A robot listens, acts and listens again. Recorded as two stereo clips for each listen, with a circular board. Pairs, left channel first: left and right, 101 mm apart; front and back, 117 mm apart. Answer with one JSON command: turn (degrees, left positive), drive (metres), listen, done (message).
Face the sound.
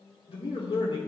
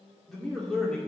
{"turn": 80}
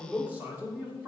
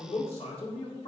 {"turn": -25}
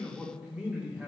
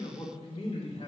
{"turn": -15}
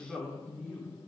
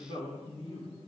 {"turn": -15}
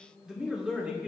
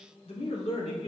{"turn": -10}
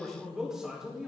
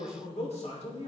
{"done": "Facing the man speaking."}